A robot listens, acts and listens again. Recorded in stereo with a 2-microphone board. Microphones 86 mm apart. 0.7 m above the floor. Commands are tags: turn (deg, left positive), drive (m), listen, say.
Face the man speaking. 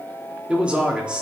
<turn deg="-30"/>
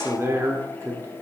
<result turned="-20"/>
<turn deg="-145"/>
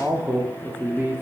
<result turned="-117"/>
<turn deg="-30"/>
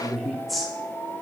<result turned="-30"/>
<say>Found it: a man speaking, straight ahead, 1 to 2 m away.</say>